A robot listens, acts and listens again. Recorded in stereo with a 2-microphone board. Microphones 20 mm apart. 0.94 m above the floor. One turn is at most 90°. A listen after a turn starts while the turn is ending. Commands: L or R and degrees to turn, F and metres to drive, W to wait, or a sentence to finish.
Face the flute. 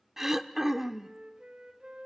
R55
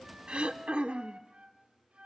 R65
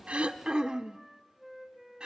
R10
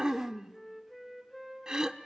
Facing the flute, over 4 m away.